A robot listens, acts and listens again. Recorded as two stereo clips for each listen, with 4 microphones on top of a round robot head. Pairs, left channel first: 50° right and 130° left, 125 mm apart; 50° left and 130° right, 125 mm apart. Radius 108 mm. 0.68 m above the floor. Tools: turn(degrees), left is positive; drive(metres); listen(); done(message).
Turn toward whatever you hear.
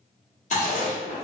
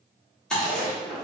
turn(degrees=-35)
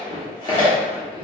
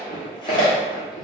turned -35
done("Found it: chewing, straight ahead, 1 to 2 m away.")